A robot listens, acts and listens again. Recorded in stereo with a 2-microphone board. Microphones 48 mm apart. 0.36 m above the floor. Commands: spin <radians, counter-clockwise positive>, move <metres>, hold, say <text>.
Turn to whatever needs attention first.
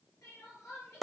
spin 1.57
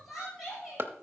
say Found it: crying, straight ahead, over 4 m away.